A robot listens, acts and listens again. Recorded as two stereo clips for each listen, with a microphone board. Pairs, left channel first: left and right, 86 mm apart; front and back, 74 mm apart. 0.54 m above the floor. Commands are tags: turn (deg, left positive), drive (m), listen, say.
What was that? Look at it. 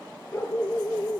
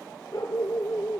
<turn deg="30"/>
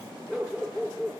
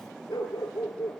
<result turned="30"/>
<say>Facing the dog barking.</say>